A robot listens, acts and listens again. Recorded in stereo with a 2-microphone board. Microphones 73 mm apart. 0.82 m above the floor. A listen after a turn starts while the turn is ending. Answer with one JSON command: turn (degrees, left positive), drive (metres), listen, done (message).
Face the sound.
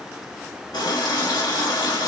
{"turn": 70}
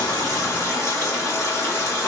{"turn": 35}
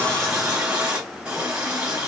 {"turn": -15}
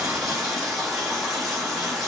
{"done": "Found it: a running tap, straight ahead."}